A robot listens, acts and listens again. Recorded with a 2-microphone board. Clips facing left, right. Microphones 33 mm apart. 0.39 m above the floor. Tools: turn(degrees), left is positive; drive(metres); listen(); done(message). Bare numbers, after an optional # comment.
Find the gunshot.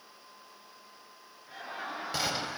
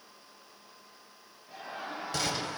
turn(30)
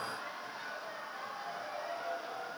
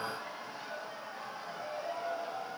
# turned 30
listen()
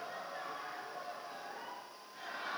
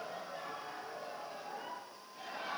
done("I heard a gunshot, but can't make it out now. It was about 15° right or 135° left.")